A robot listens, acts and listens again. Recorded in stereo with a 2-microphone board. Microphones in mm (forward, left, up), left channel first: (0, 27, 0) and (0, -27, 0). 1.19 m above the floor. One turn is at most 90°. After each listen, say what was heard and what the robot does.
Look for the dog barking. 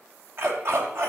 The dog barking: about 55° right or 125° right. Turn 55° right.
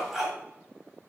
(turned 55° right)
So it is at 10° right. Turn 10° right.
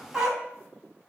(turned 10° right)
The dog barking is now 10° right. Turn 10° right.
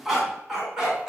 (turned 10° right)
The dog barking is now 10° right. Turn 10° right.
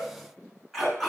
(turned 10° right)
Found it: a dog barking, straight ahead, over 4 m away.